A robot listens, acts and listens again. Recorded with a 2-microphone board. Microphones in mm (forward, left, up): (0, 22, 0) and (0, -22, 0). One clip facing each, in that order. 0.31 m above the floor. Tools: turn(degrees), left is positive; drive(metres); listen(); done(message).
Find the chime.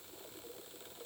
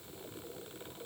listen()
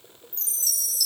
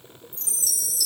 turn(degrees=30)
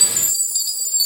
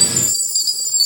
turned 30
turn(degrees=150)
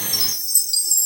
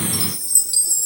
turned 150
turn(degrees=-15)
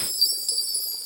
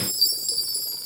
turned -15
done("Found it: a chime, straight ahead, 1 to 2 m away.")